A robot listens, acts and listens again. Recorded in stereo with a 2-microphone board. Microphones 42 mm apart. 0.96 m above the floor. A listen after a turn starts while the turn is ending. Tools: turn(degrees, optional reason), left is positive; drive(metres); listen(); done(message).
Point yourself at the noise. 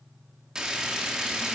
turn(degrees=-20, reason="The frying: about 20° right or 160° right.")
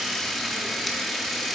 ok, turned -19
done("Found it: frying, straight ahead, under 1 m away.")